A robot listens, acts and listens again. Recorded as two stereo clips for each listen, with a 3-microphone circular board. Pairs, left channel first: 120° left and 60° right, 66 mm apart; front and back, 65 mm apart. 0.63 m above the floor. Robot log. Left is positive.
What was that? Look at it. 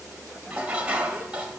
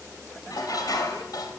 note: The dishes clattering: 10° left.
cmd yaw +10
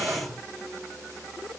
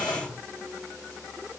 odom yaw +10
end: Facing the dishes clattering, 1 to 2 m away.